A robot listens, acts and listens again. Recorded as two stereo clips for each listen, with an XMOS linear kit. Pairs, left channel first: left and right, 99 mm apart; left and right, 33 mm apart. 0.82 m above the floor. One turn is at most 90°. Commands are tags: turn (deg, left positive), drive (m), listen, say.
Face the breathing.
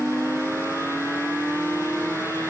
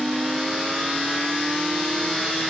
<listen/>
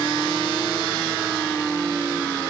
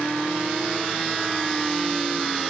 <listen/>
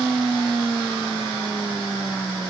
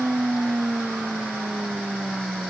<say>I can't make out breathing.</say>